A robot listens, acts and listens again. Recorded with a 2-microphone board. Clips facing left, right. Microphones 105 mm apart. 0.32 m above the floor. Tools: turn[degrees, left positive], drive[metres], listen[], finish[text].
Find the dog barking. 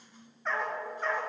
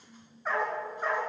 Action: turn[-30]
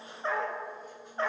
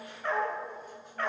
Thought: So it is at 25° left.
Action: turn[25]
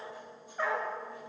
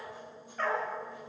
Thought: The dog barking is now 15° left.
Action: turn[15]
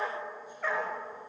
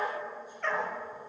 Thought: The dog barking is now 10° left.
Action: turn[10]
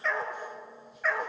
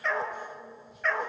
Action: finish[Facing the dog barking.]